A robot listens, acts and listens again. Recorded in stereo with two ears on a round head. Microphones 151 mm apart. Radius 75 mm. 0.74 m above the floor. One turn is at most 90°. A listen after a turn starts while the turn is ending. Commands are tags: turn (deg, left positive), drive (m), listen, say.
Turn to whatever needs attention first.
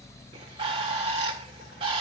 <listen/>
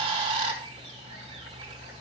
<listen/>
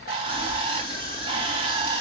<turn deg="20"/>
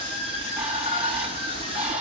<turn deg="90"/>
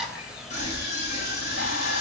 <turn deg="40"/>
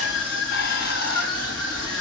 <say>Found it: a scream, straight ahead, over 4 m away.</say>